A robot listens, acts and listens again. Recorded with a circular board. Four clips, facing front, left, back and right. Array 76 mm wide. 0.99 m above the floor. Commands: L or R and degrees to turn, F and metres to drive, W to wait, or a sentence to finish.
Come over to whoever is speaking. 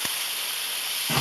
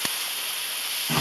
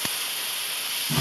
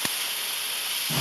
W
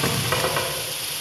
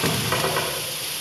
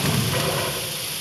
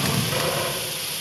W
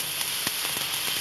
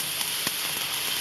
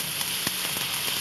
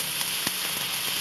I can't make out anyone speaking to turn to.